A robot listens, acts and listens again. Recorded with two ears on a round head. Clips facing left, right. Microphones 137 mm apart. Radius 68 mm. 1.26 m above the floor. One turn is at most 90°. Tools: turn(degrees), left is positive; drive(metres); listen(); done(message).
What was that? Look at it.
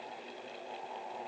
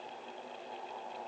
listen()
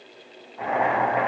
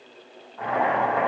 turn(degrees=15)
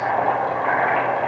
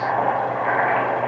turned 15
done("Facing the boiling, 2 to 4 m away.")